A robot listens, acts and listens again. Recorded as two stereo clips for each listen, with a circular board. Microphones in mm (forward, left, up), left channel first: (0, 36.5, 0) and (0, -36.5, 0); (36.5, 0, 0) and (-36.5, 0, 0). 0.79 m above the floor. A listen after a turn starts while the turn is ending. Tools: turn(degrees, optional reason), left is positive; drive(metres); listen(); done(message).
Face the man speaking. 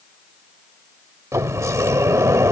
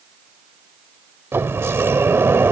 listen()
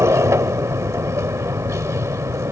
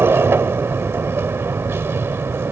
listen()
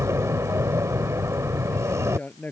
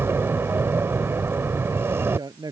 turn(degrees=155, reason="The man speaking: 155° left.")
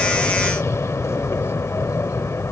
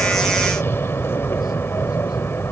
listen()
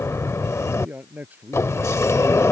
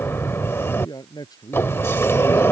turn(degrees=-25, reason="The man speaking is now 25° right.")
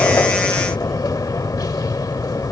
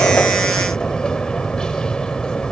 listen()
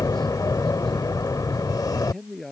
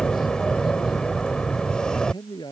done("Facing the man speaking.")